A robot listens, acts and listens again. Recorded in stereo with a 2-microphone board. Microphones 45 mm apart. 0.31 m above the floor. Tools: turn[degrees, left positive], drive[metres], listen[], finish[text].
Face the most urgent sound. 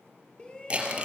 Thought: The shout: about 20° left or 160° left.
Action: turn[20]
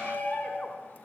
Thought: So it is at 140° left.
Action: turn[140]
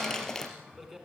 Thought: The shout is now 10° right.
Action: turn[-10]
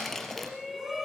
Action: finish[Found it: a shout, straight ahead, 2 to 4 m away.]